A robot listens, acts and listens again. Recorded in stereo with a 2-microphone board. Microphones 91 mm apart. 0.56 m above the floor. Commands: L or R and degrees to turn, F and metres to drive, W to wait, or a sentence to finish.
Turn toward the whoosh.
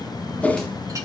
L15
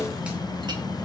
W
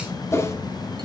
L150
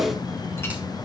Found it: a whoosh, straight ahead.